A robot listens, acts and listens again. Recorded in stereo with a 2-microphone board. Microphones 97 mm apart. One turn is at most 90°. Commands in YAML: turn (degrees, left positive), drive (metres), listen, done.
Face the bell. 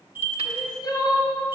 turn: -20
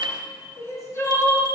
turn: -90
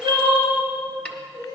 turn: -50
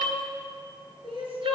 listen: true
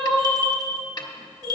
turn: -45
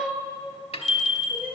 done: "Facing the bell."